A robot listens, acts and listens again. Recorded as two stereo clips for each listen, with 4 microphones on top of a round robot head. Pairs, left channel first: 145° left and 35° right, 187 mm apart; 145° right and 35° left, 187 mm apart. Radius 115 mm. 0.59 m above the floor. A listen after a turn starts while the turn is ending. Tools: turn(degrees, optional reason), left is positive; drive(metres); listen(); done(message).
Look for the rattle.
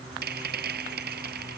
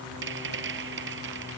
done("Found it: a rattle, straight ahead.")